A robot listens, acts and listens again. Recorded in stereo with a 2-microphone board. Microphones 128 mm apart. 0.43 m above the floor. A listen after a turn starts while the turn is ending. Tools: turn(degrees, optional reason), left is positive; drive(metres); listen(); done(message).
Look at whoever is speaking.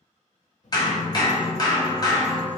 turn(degrees=65, reason="The child speaking: about 65° left or 115° left.")
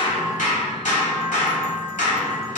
listen()
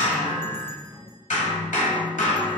turn(degrees=10, reason="So it is at 10° left.")
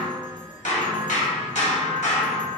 listen()
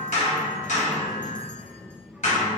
done("Found it: a child speaking, straight ahead, under 1 m away.")